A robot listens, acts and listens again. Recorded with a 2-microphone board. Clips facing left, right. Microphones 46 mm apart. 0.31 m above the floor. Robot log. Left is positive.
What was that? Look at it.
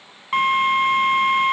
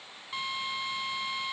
note: The drill: about 55° left or 125° left.
cmd yaw +55
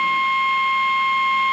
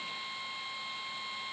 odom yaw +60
note: So it is at 65° left.
cmd yaw +65
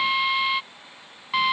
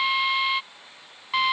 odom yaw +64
end: Facing the drill.